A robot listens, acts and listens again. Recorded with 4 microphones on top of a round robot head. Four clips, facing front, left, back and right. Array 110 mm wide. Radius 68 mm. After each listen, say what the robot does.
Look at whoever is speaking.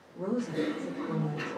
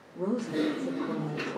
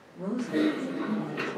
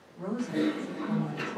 Turn 100° left.
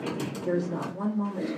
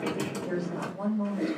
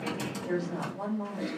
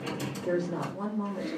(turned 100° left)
Facing the woman speaking, 1 to 2 m away.